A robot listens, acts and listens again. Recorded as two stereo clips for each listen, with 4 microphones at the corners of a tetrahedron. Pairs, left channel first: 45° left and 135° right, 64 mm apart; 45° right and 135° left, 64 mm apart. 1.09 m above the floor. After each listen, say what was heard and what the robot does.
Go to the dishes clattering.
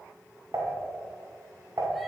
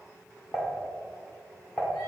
The dishes clattering: 110° right. Turn 110° right.
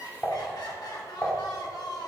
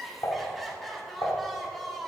The dishes clattering is now 20° right. Turn 20° right.
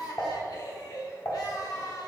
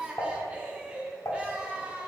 Drive 1.0 m forward.
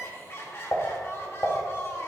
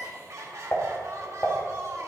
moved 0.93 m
Drive 1.0 m forward.
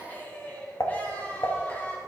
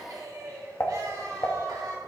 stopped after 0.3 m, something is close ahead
Arrived at the dishes clattering, straight ahead.